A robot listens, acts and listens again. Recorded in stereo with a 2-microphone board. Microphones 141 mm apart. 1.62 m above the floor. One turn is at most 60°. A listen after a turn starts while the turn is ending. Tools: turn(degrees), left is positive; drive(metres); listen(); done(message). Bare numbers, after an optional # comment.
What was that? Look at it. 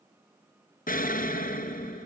turn(60)
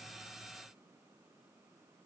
# Nothing new. It was at 30° left.
turn(30)
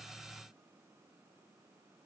done("Facing where the explosion came from. I can't hear it now.")